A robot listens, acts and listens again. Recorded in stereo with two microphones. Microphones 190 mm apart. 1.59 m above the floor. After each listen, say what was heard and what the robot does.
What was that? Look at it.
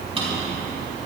The drawer: about 30° right or 150° right. Turn 30° right.
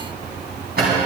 So it is at 115° right. Turn 115° right.
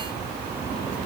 Keep listening.
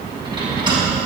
The drawer is now 25° right. Turn 25° right.
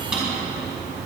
Found it: a drawer, straight ahead.